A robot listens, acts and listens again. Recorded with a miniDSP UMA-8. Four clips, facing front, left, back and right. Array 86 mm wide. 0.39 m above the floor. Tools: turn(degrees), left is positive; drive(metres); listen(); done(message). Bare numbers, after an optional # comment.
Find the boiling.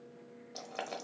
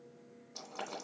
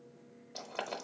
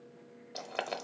# The boiling: 90° right.
turn(-90)
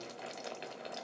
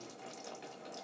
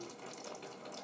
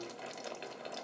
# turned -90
# The boiling is now 35° right.
turn(-35)
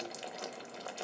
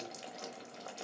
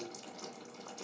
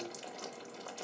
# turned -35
done("Found it: boiling, straight ahead.")